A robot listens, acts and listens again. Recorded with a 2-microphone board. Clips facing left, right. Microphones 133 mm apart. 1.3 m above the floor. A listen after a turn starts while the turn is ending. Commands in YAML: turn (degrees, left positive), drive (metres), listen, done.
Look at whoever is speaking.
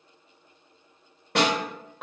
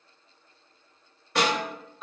listen: true
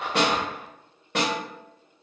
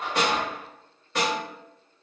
listen: true
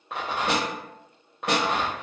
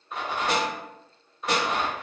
done: "I can't make out anyone speaking, only a rattle and a snare drum."